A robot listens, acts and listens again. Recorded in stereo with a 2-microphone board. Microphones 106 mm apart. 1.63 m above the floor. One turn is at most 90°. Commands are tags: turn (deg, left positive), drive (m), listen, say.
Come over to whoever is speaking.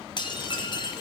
<listen/>
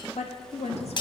<turn deg="90"/>
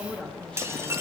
<turn deg="10"/>
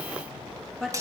<drive m="1.0"/>
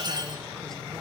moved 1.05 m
<listen/>
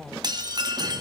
<drive m="1.0"/>
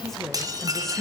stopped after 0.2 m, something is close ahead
<say>Arrived at the woman speaking, straight ahead.</say>